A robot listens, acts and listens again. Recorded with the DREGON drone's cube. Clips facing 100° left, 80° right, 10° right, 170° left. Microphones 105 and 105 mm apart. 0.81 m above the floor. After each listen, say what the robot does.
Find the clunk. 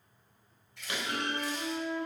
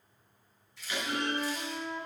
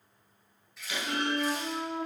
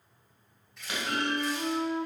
Turn 125° left.
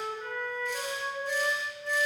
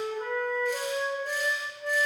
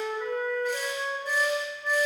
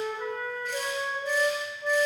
Facing where the clunk came from. I can't hear it now.